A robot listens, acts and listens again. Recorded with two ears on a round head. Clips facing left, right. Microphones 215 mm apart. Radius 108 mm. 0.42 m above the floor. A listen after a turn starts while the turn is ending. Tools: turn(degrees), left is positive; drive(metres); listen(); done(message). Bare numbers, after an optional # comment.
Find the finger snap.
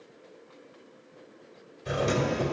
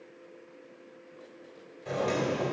listen()
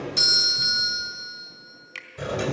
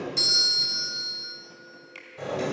# The finger snap: about 35° left or 145° left.
turn(35)
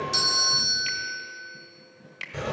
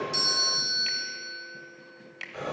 done("Facing the finger snap.")